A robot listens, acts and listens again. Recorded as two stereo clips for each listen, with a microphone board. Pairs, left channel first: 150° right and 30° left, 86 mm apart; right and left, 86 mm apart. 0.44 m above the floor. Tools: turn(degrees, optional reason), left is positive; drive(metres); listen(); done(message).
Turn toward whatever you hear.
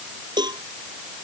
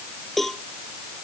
done("Found it: a cowbell, straight ahead.")